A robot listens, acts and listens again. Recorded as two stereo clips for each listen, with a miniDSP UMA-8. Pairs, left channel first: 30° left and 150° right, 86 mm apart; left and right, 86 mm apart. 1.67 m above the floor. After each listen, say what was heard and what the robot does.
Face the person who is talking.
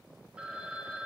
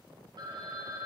Keep listening.
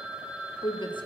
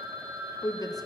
The woman speaking: 45° left. Turn 45° left.
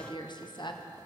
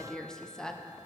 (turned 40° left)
Facing the woman speaking.